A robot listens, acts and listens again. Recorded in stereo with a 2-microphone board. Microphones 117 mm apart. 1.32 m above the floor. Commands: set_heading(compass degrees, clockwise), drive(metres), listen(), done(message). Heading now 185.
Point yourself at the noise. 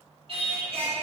set_heading(235)
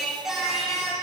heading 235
done("Found it: singing, straight ahead.")